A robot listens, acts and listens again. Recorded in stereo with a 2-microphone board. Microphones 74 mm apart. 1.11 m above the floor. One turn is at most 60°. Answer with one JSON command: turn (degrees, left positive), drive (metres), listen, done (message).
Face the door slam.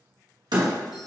{"turn": -60}
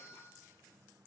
{"listen": true}
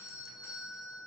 {"done": "I heard a door slam, but can't make it out now. It was about 15° right or 45° right."}